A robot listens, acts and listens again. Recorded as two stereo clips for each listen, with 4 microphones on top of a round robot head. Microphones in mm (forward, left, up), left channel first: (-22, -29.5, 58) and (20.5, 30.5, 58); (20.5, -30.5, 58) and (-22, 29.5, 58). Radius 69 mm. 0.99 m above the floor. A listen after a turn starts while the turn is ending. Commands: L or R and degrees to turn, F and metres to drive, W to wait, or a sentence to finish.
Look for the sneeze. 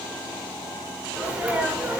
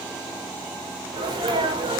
L130
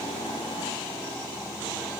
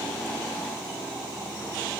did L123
Facing where the sneeze came from. I can't hear it now.